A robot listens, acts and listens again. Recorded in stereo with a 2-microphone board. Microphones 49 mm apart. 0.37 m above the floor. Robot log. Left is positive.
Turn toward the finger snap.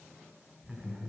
cmd idle
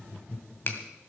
note: The finger snap: about 45° left or 135° left.
cmd yaw +45
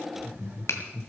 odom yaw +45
note: So it is at 85° left.
cmd yaw +85
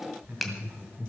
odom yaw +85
end: Found it: a finger snap, straight ahead, 1 to 2 m away.